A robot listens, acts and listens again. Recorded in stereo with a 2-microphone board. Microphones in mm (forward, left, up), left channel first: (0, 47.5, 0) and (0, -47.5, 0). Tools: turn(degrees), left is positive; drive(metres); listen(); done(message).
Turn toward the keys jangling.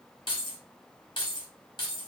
turn(degrees=55)
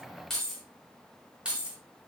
turn(degrees=-15)
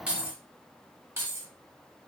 turn(degrees=-30)
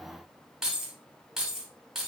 done("Facing the keys jangling, 1 to 2 m away.")